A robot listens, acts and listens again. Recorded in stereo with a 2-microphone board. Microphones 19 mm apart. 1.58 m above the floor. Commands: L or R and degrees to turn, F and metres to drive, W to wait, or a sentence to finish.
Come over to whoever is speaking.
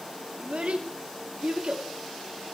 R75
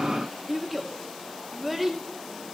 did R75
F1.0
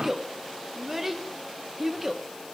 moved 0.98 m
R15
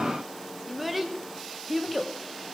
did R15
F1.0
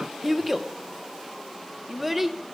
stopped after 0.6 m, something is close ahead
R10
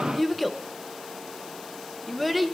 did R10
Arrived at the child speaking, straight ahead.